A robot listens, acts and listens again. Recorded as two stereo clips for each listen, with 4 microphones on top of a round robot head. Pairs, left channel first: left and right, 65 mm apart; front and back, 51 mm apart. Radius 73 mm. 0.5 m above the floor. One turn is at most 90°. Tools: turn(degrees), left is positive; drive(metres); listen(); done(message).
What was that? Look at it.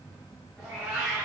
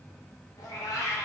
turn(degrees=-10)
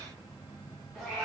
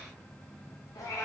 done("Facing the cat meowing, 1 to 2 m away.")